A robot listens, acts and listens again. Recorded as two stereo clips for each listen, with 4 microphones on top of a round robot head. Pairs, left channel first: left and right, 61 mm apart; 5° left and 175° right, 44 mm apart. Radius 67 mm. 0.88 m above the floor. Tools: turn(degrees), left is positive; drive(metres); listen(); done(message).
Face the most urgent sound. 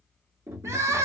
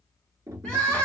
turn(degrees=-60)
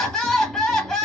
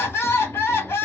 turn(degrees=10)
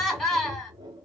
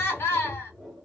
done("Facing the crying.")